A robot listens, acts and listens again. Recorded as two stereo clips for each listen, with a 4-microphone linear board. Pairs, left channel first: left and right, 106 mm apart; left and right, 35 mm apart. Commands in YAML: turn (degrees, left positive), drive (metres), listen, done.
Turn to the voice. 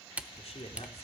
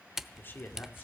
turn: 70
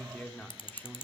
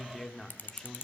turn: 15
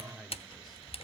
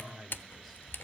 done: "Facing the man speaking, 1 to 2 m away."